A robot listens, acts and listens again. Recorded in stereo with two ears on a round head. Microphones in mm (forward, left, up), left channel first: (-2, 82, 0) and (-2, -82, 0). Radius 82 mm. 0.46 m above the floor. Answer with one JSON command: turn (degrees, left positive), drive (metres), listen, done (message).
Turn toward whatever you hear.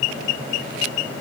{"listen": true}
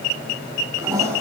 {"turn": -15}
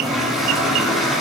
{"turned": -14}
{"done": "Found it: a toilet flushing, straight ahead, over 4 m away."}